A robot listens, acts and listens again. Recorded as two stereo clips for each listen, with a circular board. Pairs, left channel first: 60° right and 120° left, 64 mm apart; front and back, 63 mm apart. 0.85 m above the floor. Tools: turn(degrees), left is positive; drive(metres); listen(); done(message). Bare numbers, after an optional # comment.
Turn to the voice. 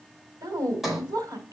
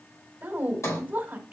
# The woman speaking: 115° left.
turn(115)
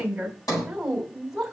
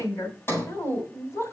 # The woman speaking is now 35° left.
turn(35)
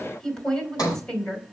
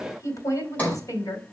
# The woman speaking is now 15° left.
turn(15)
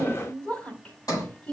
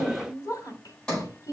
done("Found it: a woman speaking, straight ahead, 2 to 4 m away.")